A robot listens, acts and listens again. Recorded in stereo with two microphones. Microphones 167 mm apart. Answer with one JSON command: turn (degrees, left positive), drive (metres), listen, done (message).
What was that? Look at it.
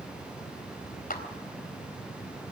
{"turn": 60}
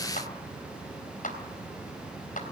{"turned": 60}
{"turn": 55}
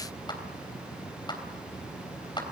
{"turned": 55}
{"turn": 25}
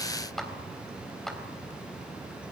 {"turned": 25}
{"done": "Found it: a clap, straight ahead."}